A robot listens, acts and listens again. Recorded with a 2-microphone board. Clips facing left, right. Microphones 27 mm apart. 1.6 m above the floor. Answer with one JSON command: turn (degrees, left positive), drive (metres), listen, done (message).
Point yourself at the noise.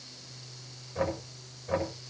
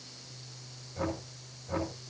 {"turn": 90}
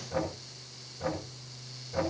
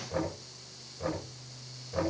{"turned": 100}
{"turn": -10}
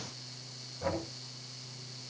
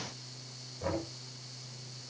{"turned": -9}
{"done": "Facing the knocking, over 4 m away."}